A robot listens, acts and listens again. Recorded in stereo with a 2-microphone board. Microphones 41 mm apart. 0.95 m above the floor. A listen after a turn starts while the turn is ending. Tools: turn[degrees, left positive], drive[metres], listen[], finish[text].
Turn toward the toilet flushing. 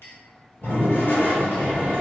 Thought: The toilet flushing: about 60° left or 120° left.
Action: turn[60]
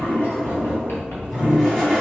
Thought: So it is at 10° left.
Action: turn[10]
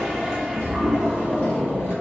Action: finish[Found it: a toilet flushing, straight ahead, 1 to 2 m away.]